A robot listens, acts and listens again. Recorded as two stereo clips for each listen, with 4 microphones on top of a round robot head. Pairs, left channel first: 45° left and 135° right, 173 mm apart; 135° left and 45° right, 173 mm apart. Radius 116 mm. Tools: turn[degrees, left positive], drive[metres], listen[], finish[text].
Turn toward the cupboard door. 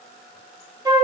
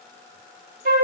Action: listen[]
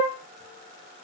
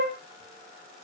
Action: listen[]
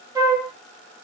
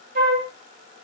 Action: finish[I can't make out a cupboard door to turn to.]